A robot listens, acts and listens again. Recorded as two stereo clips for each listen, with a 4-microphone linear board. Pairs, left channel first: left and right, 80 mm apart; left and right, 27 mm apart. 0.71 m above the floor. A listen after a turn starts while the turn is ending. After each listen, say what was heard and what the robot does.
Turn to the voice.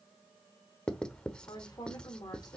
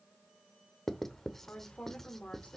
The woman speaking: about 55° left or 125° left. Turn 55° left.
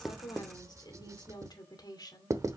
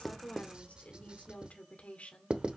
So it is at 65° left. Turn 65° left.
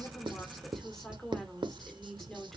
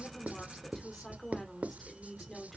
Found it: a woman speaking, straight ahead.